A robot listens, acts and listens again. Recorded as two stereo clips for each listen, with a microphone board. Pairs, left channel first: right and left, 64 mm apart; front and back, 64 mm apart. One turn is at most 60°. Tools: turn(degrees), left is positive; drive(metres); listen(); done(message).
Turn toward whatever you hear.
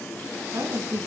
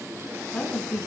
turn(degrees=60)
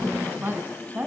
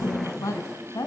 turn(degrees=30)
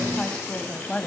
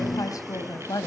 turn(degrees=-15)
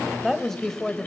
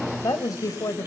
turn(degrees=-10)
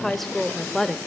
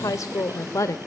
turn(degrees=-10)
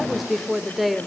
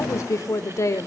done("Found it: a woman speaking, straight ahead, 1 to 2 m away.")